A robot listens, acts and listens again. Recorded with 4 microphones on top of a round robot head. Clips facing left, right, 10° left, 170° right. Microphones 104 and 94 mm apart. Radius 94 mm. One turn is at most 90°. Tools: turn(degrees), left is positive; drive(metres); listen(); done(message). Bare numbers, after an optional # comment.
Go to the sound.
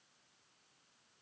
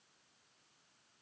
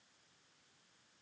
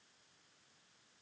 listen()
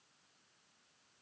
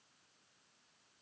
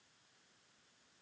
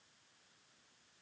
listen()
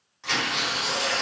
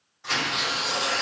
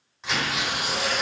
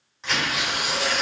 # The tearing paper: 95° left.
turn(90)
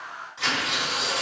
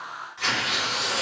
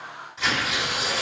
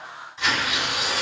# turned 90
# The tearing paper is now 30° left.
turn(30)
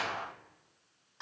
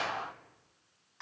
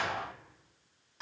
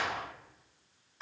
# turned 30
listen()
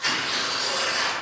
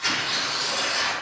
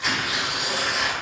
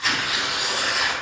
# The tearing paper is now 15° left.
turn(15)
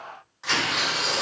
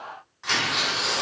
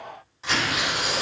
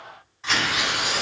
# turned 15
drive(1.0)
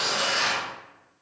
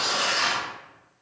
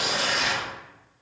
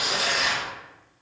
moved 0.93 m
# The tearing paper is now 10° left.
turn(10)
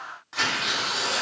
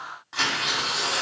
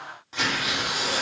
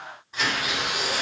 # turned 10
drive(1.0)
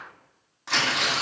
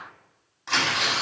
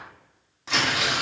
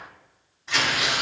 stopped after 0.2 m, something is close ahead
done("Arrived at the tearing paper, straight ahead.")